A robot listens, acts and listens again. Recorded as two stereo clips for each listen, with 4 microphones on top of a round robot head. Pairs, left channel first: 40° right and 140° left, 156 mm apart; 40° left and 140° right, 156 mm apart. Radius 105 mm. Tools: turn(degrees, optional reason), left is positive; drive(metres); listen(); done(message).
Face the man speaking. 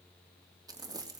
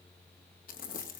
listen()
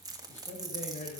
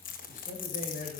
done("Found it: a man speaking, straight ahead.")